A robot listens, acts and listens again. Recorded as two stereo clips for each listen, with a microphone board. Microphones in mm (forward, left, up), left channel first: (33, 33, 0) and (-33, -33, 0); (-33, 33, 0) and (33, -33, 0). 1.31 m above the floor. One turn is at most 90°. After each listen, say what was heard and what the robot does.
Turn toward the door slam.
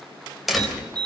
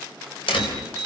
The door slam: 135° left. Turn 90° left.
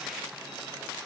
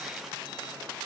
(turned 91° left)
Nothing new. It was at 45° left. Turn 45° left.
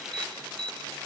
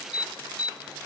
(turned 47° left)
Facing where the door slam came from. I can't hear it now.